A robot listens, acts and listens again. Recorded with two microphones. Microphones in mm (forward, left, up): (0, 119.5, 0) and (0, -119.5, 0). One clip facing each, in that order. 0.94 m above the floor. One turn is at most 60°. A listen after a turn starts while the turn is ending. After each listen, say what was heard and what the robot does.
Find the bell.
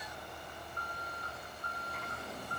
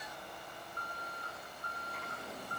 Keep listening.
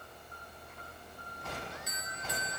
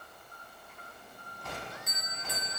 The bell: about 50° right or 130° right. Turn 50° right.
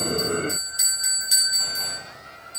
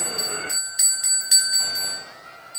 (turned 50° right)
So it is at 75° right. Turn 60° right.
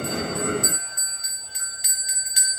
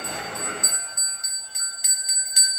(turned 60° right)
The bell is now 50° right. Turn 50° right.
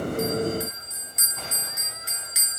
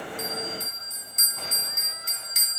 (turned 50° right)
The bell is now 10° left. Turn 10° left.
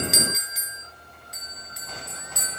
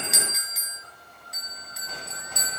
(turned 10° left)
Facing the bell, 2 to 4 m away.